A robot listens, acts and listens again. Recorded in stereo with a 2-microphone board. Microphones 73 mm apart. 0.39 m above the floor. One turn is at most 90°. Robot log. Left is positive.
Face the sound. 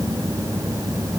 cmd idle
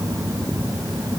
cmd idle
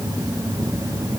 end: I can't make out anything.